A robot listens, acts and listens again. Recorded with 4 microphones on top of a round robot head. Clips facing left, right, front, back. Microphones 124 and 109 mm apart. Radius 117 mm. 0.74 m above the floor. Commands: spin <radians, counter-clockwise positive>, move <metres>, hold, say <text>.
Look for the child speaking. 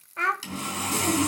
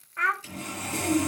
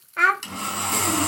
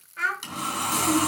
spin 0.44
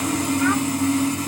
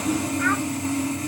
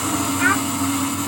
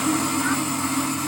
hold
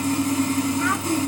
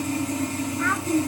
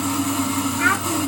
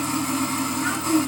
hold
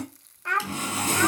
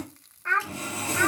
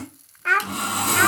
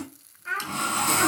spin 0.26
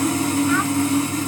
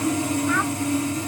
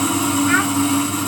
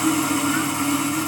hold
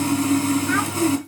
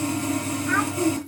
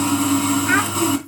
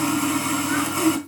hold
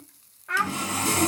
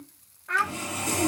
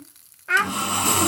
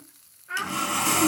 say Facing the child speaking.